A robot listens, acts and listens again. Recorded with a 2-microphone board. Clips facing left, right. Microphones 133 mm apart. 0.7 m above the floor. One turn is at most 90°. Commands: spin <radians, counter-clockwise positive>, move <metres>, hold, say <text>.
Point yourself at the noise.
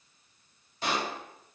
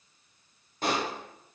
spin -0.87
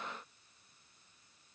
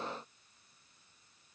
hold
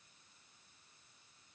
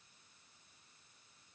say I heard a pop, but can't make it out now. It was about straight ahead or 80° right.